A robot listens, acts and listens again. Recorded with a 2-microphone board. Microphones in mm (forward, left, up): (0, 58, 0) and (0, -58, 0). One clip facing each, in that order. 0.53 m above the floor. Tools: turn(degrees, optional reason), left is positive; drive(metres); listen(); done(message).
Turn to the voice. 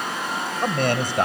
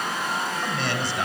turn(degrees=50, reason="The man speaking: about 50° left or 130° left.")
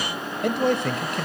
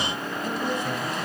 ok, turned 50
turn(degrees=80, reason="So it is at 80° left.")
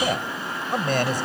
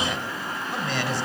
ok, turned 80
turn(degrees=50, reason="The man speaking is now 50° left.")
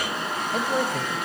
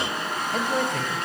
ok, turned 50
done("Facing the man speaking.")